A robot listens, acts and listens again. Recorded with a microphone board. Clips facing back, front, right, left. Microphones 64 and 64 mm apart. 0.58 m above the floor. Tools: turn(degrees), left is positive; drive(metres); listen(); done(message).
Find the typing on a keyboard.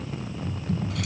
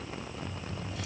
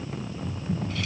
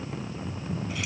turn(degrees=-125)
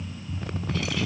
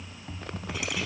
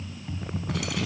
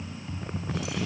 turn(degrees=-10)
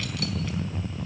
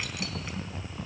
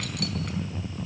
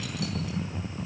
done("Facing the typing on a keyboard.")